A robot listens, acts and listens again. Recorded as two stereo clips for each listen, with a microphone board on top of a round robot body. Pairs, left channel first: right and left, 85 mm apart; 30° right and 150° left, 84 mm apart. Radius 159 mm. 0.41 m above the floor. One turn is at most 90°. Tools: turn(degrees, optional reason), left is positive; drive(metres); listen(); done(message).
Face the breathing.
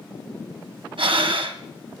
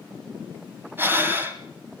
turn(degrees=85, reason="The breathing: 85° left.")
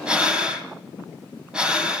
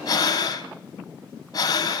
turn(degrees=15, reason="The breathing is now 15° left.")
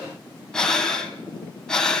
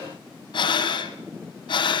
done("Facing the breathing, 2 to 4 m away.")